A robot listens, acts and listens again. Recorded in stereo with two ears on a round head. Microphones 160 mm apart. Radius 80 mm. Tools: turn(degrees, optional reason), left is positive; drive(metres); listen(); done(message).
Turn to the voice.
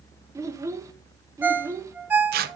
turn(degrees=-20, reason="The child speaking: about 20° right or 160° right.")
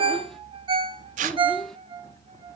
listen()
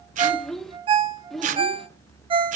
done("Facing the child speaking.")